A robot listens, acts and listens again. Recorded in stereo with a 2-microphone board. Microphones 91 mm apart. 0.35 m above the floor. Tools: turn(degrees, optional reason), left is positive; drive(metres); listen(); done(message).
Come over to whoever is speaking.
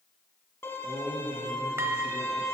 turn(degrees=40, reason="The man speaking: about 40° left or 140° left.")
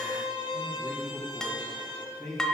drive(metres=1.0)
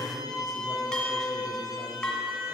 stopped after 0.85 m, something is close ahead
listen()
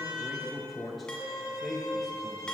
done("Arrived at the man speaking, straight ahead.")